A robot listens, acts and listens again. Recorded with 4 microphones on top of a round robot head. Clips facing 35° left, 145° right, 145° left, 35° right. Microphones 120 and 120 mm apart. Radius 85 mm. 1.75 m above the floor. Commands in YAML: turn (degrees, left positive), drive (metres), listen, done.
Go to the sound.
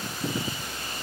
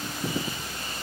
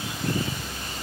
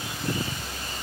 listen: true
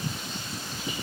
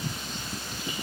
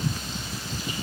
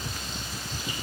listen: true
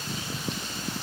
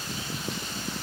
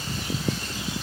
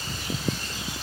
done: "I can't make out anything."